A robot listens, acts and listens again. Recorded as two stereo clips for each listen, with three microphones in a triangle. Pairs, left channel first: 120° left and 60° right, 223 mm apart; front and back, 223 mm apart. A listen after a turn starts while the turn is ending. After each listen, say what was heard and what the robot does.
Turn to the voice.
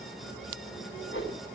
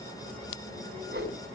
Keep listening.
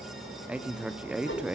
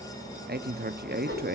The man speaking: 145° right. Turn 145° right.
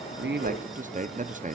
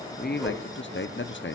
The man speaking is now 10° right. Turn 10° right.
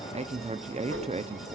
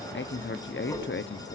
Facing the man speaking, under 1 m away.